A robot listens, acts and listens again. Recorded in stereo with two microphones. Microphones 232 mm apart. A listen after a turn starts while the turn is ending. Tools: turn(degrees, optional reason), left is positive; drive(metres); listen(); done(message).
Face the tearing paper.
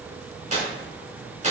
turn(degrees=-35, reason="The tearing paper: about 35° right or 145° right.")
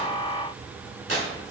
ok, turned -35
turn(degrees=-110, reason="So it is at 110° right.")
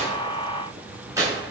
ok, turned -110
turn(degrees=-15, reason="The tearing paper is now 15° right.")
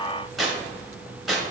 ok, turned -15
done("Facing the tearing paper.")